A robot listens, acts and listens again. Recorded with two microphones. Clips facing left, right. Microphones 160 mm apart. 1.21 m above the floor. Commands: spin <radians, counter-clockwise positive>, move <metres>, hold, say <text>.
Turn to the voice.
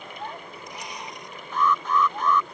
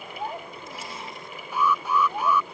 spin -0.44
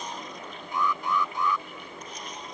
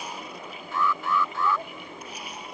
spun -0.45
hold
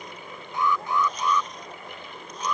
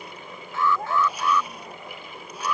spin -2.18
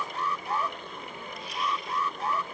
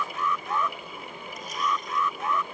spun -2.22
hold
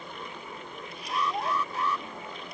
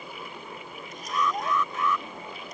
say Facing the child speaking.